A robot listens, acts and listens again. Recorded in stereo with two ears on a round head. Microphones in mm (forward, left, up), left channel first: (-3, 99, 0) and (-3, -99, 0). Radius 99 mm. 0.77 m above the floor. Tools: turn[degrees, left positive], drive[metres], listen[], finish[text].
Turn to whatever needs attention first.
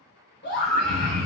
Thought: The scream: about 50° left or 130° left.
Action: turn[50]
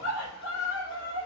Thought: So it is at 75° left.
Action: turn[75]
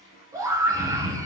Thought: The scream is now 15° right.
Action: turn[-15]
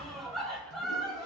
Action: finish[Facing the scream.]